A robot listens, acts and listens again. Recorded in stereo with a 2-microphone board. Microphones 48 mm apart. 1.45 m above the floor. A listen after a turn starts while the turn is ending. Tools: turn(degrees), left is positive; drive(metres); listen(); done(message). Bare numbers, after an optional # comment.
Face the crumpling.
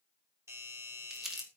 turn(-30)
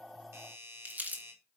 # So it is at 145° right.
turn(-145)
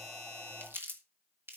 # The crumpling is now 55° right.
turn(-55)
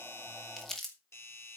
# The crumpling is now 10° left.
turn(10)
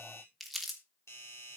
done("Found it: crumpling, straight ahead, 2 to 4 m away.")